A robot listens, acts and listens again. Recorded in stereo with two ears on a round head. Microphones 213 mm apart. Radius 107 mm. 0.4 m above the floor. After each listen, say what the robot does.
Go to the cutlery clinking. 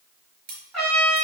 Turn 40° right.
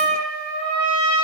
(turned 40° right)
Keep listening.
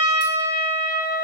Keep listening.
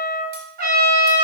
I heard cutlery clinking, but can't make it out now. It was about straight ahead or 100° right. I did not reach it.